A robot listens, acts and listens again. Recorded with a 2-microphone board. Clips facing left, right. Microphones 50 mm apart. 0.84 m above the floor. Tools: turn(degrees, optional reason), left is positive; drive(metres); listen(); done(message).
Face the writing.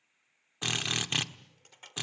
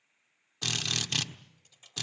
listen()
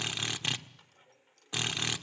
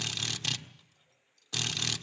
listen()
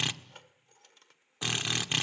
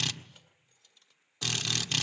done("I can't make out writing, only keys jangling and a drill.")